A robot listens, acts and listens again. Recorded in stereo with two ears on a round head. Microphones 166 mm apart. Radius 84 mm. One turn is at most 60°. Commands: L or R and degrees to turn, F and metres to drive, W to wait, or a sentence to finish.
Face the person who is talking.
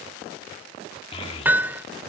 L30
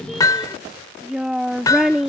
Facing the child speaking.